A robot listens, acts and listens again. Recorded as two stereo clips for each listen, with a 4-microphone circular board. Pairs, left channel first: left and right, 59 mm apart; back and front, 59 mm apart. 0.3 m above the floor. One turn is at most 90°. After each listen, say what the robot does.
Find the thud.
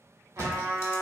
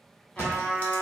Turn 60° right.
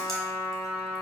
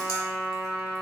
Facing where the thud came from. I can't hear it now.